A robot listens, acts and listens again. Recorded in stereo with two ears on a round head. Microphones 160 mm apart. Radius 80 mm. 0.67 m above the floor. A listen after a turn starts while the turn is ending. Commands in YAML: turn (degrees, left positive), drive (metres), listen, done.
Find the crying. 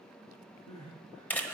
turn: 90
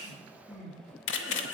done: "Facing the crying."